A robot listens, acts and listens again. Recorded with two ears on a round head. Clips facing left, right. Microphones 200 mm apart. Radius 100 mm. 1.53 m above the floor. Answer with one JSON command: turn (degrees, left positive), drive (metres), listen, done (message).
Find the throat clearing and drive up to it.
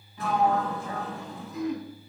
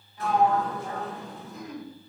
{"turn": 60}
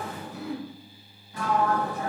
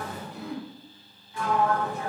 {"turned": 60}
{"drive": 1.0}
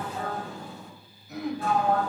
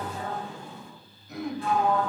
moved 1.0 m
{"drive": 1.0}
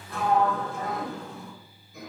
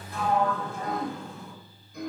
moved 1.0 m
{"drive": 1.0}
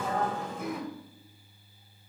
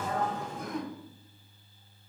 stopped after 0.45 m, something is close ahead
{"turn": 10}
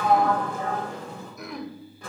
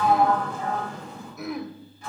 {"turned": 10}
{"done": "I am next to the throat clearing."}